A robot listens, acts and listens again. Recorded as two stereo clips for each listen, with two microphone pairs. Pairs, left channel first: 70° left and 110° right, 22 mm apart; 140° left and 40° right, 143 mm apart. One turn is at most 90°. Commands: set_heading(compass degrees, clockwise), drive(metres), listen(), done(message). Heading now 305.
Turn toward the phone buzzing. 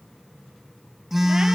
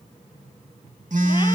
set_heading(335)
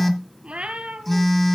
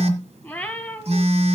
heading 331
done("Found it: a phone buzzing, straight ahead, 1 to 2 m away.")